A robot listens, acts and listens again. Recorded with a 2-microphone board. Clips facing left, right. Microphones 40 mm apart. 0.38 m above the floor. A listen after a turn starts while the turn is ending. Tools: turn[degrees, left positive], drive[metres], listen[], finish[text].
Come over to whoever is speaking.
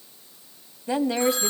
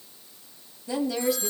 Thought: The woman speaking: about 40° left or 140° left.
Action: turn[40]
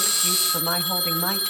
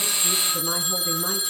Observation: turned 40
Thought: So it is at 90° left.
Action: turn[90]
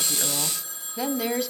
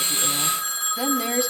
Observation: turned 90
Action: drive[1.0]
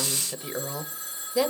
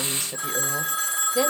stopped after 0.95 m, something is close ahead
Action: finish[I am next to the woman speaking.]